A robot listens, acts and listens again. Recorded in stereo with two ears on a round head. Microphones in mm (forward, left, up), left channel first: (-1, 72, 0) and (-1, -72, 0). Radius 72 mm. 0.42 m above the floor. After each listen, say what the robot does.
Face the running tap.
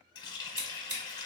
Turn 25° left.
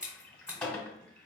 Turn 10° left.
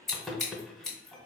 Found it: a running tap, straight ahead, under 1 m away.